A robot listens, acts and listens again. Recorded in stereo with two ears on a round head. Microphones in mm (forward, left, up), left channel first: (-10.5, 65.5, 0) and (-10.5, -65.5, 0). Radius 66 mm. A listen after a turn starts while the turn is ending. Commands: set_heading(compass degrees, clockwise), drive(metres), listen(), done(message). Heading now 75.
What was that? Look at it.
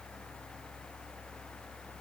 listen()
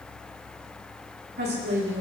set_heading(165)
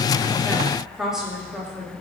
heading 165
done("Facing the woman speaking, 2 to 4 m away.")